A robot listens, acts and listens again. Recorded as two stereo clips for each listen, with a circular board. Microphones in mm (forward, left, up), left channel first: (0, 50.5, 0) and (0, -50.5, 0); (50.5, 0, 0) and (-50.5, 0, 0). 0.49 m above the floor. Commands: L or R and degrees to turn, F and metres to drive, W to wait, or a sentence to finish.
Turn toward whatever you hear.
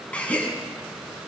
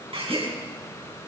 L165
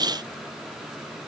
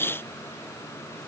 Facing where the gasp came from. I can't hear it now.